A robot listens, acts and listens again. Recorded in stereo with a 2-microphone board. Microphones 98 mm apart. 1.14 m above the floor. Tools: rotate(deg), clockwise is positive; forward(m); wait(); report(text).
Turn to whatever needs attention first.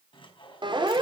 rotate(55)
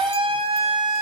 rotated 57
rotate(70)
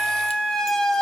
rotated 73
report("Found it: a siren, straight ahead, over 4 m away.")